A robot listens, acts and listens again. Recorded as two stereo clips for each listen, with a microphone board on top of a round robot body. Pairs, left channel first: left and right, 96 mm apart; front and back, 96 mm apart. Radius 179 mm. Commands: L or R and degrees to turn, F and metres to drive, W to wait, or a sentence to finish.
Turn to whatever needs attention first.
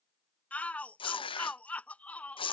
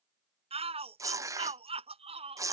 L170
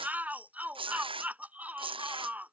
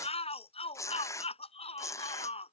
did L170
R15
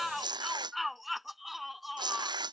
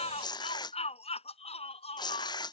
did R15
Facing the shout.